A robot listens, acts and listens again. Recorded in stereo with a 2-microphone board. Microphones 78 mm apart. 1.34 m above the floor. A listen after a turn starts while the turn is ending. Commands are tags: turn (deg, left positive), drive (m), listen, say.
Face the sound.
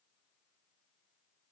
<listen/>
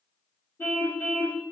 <turn deg="30"/>
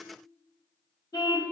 <turn deg="120"/>
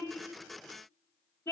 <turn deg="30"/>
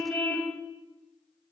<turn deg="15"/>
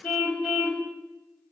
<say>Facing the car horn, 2 to 4 m away.</say>